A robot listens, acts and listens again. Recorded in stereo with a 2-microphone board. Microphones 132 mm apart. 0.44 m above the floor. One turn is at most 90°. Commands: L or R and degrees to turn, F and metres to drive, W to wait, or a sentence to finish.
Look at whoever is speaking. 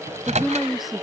L30
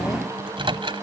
W
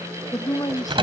L90
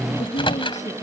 L60
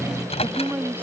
R15
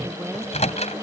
W
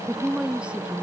R10
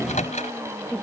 Found it: a woman speaking, straight ahead.